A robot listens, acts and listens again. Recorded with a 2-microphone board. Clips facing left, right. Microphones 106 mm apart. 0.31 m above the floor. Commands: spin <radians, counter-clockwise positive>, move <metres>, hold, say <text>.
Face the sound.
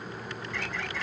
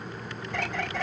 spin -0.96
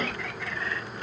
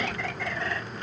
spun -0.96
spin -1.22
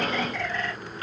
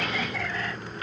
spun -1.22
say Facing the bird, 2 to 4 m away.